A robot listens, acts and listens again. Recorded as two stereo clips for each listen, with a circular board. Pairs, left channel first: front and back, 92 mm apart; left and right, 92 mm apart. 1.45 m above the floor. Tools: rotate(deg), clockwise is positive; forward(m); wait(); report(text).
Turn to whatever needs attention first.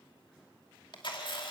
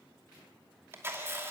wait()
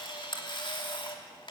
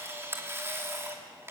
wait()
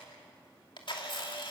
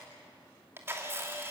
report("I can't make out anything urgent to turn to.")